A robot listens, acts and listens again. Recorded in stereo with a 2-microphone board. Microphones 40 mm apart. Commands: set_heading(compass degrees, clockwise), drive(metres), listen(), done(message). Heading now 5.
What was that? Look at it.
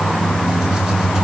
listen()
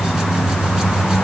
listen()
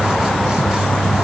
done("I can't make out anything to turn to.")